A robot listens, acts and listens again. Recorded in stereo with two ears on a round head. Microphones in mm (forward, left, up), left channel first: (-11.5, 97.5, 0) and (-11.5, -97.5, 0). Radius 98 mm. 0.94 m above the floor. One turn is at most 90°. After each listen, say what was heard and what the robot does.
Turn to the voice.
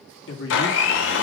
The man speaking: about 60° left or 120° left. Turn 60° left.
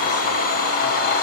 Keep listening.
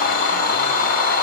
Keep listening.
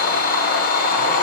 I heard a man speaking, but can't make it out now. It was about straight ahead or 60° left.